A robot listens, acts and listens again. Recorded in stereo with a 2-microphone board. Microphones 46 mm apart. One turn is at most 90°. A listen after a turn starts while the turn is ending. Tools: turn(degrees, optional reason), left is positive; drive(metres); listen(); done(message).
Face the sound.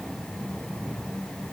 listen()
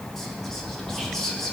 turn(degrees=30)
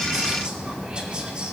turn(degrees=-20, reason="So it is at 20° right.")
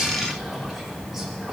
listen()
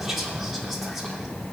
done("Facing the whispering, 2 to 4 m away.")